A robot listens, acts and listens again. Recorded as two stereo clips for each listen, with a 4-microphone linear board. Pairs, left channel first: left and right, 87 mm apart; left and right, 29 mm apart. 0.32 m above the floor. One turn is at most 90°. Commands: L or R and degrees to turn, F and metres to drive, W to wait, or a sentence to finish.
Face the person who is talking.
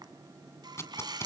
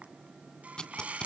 W
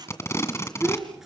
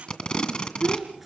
R30
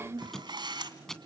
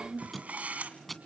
R90
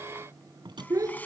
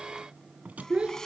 R45
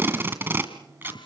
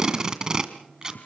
W
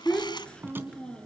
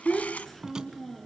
L10
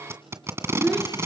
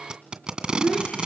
Facing the child speaking.